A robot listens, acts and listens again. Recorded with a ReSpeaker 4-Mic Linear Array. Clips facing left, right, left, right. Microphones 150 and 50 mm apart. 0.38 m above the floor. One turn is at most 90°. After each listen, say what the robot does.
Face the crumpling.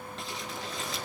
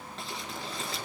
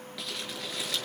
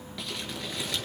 Turn 30° left.
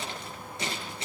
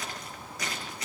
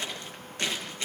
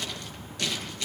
Turn 90° left.
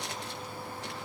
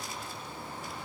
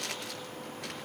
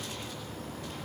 Turn 90° left.
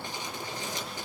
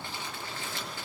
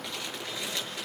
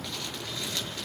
Turn 15° left.
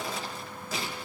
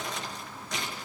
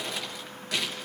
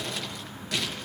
Found it: crumpling, straight ahead, over 4 m away.